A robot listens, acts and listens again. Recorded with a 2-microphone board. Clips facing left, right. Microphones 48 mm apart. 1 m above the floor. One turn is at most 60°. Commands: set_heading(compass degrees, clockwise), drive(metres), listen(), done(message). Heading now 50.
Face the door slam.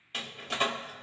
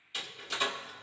set_heading(5)
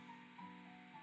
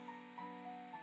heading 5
listen()
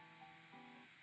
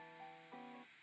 done("I heard a door slam, but can't make it out now. It was about straight ahead or 90° left.")